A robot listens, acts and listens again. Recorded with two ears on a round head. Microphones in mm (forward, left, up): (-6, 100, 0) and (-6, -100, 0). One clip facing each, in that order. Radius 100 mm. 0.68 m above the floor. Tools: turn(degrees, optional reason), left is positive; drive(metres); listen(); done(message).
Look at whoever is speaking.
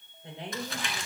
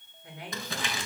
turn(degrees=25, reason="The woman speaking: about 25° left or 155° left.")
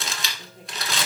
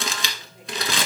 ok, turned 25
done("Found it: a woman speaking, straight ahead.")